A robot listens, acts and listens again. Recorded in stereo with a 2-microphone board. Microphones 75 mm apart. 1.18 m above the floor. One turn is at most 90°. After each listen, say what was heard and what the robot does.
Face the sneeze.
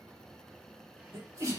The sneeze: about 40° right or 140° right. Turn 40° right.
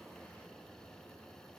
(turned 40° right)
Keep listening.
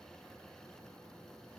I heard a sneeze, but can't make it out now. It was about straight ahead or 100° right.